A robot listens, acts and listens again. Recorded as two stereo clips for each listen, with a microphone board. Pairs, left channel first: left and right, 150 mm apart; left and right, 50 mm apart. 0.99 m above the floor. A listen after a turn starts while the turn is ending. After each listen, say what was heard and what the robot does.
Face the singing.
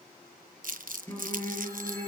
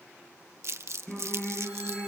The singing: about 15° left or 165° left. Turn 15° left.
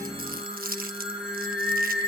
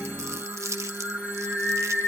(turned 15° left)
Turn 30° left.
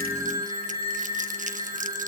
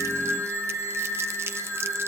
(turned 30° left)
So it is at 30° right. Turn 30° right.
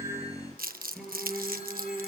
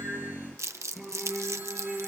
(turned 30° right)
Facing the singing.